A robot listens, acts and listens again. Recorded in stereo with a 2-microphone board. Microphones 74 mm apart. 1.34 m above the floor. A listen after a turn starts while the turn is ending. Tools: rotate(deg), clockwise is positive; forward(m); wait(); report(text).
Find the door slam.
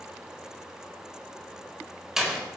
rotate(30)
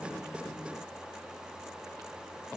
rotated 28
wait()
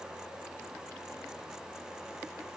report("I heard a door slam, but can't make it out now. It was about 25° left or 150° right.")